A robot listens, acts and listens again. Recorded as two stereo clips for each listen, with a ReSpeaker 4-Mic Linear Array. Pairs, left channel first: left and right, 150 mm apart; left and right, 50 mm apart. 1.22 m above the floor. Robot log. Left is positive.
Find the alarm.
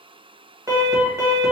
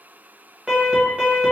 note: The alarm: about 20° right or 160° right.
cmd yaw -20
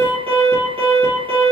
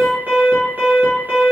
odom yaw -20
note: So it is at 145° right.
cmd yaw -145
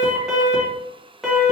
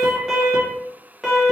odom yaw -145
end: Facing the alarm.